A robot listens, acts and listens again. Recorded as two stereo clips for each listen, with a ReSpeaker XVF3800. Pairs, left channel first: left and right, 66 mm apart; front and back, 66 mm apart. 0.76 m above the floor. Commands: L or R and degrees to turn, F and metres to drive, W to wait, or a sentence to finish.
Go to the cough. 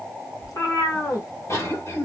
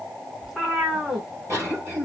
L130
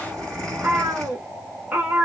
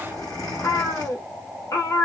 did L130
L10
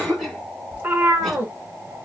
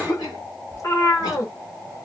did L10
F1.0
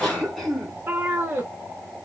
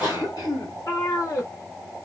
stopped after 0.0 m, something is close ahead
Something is in my way. I am facing the cough but have not reached it.